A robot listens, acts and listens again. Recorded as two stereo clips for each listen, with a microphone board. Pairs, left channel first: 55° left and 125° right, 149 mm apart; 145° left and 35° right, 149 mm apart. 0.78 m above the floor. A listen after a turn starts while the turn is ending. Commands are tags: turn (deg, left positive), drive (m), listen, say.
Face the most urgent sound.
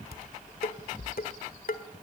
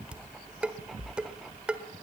<listen/>
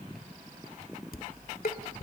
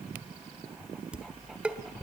<listen/>
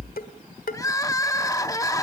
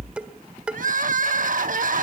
<turn deg="-10"/>
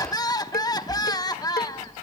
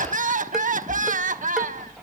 <turn deg="-10"/>
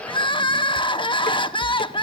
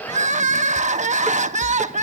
<say>Facing the crying.</say>